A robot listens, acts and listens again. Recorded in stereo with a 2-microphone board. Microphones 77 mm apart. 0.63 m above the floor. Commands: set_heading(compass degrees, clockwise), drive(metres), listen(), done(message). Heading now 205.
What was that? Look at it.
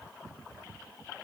listen()
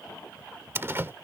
set_heading(235)
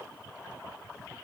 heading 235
listen()
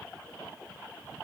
done("I heard a door slam, but can't make it out now. It was about straight ahead or 120° right.")